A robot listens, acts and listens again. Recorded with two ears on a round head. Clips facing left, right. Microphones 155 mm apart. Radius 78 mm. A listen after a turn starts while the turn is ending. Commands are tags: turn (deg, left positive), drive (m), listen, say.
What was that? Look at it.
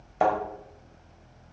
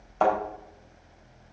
<turn deg="30"/>
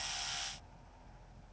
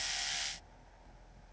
<listen/>
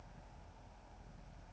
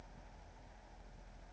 <say>I heard a thud, but can't make it out now. It was about 15° right or 135° left.</say>